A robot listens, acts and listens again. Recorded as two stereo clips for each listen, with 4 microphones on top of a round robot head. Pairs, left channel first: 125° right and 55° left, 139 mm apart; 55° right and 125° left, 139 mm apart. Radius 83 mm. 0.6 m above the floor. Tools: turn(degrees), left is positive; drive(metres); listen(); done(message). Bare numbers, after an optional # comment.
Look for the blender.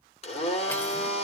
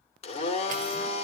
# The blender: 90° right.
turn(-90)
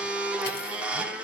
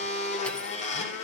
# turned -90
# The blender is now 25° right.
turn(-25)
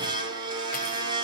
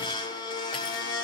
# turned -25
done("Facing the blender, 2 to 4 m away.")